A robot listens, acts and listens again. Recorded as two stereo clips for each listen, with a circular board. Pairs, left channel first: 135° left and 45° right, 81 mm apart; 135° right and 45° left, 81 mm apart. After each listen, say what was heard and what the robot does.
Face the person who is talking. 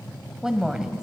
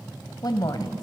The woman speaking: 125° right. Turn 125° right.
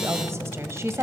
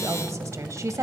Found it: a woman speaking, straight ahead, 1 to 2 m away.